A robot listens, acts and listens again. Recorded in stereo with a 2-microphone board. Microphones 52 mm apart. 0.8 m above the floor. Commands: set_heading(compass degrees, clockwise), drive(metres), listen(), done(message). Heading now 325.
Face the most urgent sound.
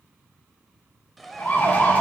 set_heading(290)
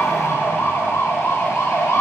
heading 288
set_heading(183)
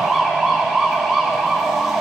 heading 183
done("Found it: a siren, straight ahead, 2 to 4 m away.")